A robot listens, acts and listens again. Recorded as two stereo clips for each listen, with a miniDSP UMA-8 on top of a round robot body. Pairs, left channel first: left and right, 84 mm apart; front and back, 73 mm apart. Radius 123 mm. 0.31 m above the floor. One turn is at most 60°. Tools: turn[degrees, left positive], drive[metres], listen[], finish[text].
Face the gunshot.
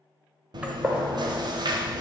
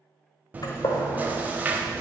Thought: The gunshot: 15° right.
Action: turn[-15]
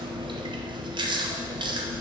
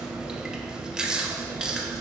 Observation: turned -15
Action: finish[I heard a gunshot from this way, but can't make it out now.]